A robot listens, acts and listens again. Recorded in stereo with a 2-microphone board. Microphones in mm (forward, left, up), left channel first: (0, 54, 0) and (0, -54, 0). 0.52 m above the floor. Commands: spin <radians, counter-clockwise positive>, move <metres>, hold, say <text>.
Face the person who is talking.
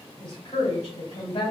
spin 0.96
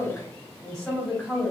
say Facing the woman speaking, 1 to 2 m away.